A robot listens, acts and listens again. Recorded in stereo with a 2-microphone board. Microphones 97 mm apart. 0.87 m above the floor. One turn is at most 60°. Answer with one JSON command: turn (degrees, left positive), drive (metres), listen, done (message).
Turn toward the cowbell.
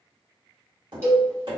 {"turn": -25}
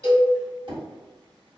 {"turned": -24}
{"turn": -60}
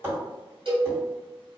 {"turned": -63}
{"turn": -60}
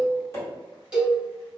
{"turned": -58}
{"turn": -10}
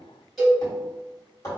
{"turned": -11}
{"done": "Found it: a cowbell, straight ahead."}